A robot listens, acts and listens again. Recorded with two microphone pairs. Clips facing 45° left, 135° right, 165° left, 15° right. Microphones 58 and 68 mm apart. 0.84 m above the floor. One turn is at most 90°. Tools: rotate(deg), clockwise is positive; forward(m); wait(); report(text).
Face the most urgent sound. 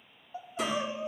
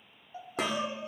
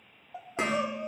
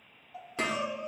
rotate(-90)
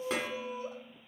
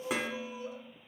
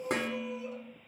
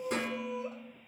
rotate(-15)
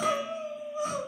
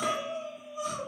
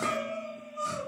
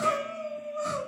report("Facing the crying.")